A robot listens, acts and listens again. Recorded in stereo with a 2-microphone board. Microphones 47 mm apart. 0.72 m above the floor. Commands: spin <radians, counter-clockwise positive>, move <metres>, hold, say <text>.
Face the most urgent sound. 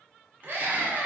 spin -0.79
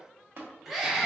say Found it: a scream, straight ahead, under 1 m away.